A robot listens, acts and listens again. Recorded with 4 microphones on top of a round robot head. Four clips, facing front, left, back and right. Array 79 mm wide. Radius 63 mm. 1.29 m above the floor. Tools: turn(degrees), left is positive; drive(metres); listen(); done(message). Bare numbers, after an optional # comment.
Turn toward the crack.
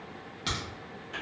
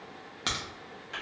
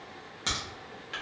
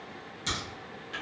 # The crack: 110° left.
turn(110)
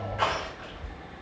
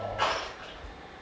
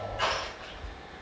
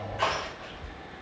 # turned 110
done("Facing where the crack came from. I can't hear it now.")